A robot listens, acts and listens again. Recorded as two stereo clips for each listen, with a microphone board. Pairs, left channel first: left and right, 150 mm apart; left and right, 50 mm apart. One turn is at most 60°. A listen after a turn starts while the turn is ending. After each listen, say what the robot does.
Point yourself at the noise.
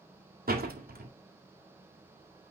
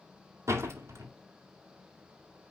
Turn 60° right.
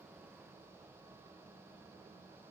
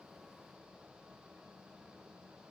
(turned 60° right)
Turn 30° right.
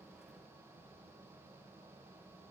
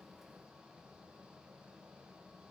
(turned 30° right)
Facing where the door slam came from. I can't hear it now.